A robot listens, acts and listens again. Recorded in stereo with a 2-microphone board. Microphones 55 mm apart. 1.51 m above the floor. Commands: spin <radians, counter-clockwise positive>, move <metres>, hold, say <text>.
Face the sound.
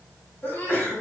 spin 0.61
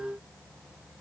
hold
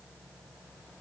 say I heard a sneeze, but can't make it out now. It was about straight ahead or 110° left.